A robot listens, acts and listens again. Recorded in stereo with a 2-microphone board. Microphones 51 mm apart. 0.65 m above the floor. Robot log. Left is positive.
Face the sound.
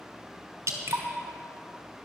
note: The dripping: about 75° right or 105° right.
cmd yaw -75
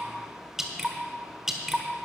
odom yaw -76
note: So it is at 10° right.
cmd yaw -10
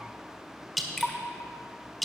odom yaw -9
end: Found it: dripping, straight ahead.